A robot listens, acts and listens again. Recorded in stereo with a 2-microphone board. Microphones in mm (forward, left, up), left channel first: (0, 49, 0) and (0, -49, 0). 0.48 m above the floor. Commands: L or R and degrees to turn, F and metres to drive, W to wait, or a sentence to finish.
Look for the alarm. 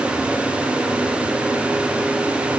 W
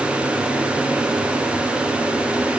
W
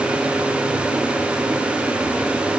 I can't make out an alarm.